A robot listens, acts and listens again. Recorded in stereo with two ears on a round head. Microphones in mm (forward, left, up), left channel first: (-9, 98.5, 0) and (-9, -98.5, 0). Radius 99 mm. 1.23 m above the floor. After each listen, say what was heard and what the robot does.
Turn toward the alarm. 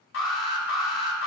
The alarm: about 60° left or 120° left. Turn 60° left.
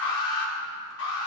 So it is at 60° left. Turn 60° left.
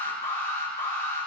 The alarm is now 10° left. Turn 10° left.
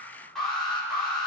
Facing the alarm.